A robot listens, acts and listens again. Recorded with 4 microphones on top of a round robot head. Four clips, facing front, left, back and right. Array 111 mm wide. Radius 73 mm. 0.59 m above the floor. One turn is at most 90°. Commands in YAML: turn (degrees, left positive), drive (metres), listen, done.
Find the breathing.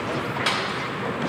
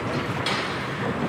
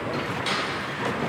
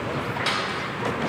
listen: true
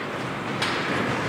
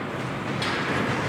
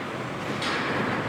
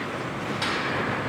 listen: true
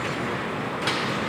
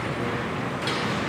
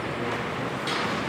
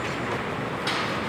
done: "I can't make out breathing, only a snare drum."